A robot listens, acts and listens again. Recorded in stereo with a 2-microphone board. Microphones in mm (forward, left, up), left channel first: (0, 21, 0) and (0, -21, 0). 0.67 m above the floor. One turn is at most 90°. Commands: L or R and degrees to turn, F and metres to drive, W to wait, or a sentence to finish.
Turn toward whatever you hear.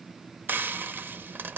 R50
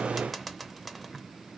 Facing the frying.